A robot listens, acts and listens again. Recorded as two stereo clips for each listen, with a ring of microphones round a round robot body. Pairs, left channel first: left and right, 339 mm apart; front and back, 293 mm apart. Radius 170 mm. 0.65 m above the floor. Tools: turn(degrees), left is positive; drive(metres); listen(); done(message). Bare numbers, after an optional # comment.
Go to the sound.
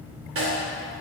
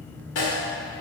# The snare drum: 40° right.
turn(-40)
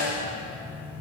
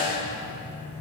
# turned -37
drive(1.0)
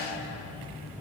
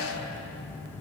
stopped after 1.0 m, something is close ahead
listen()
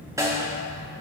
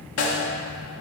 # The snare drum is now 10° right.
turn(-10)
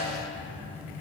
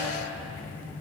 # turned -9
listen()
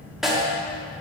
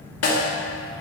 done("I am next to the snare drum.")